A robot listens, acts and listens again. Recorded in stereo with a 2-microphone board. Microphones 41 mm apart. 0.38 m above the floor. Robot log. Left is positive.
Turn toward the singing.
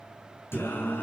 note: The singing: about 75° left or 105° left.
cmd yaw +75
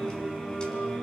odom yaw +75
note: So it is at 25° left.
cmd yaw +25
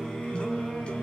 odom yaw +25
note: The singing is now 30° left.
cmd yaw +30
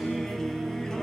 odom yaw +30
note: The singing is now 15° left.
cmd yaw +15
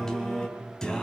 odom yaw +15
note: The singing is now 20° left.
cmd yaw +20
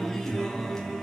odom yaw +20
note: The singing is now 15° left.
cmd yaw +15
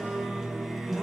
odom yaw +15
end: Found it: singing, straight ahead.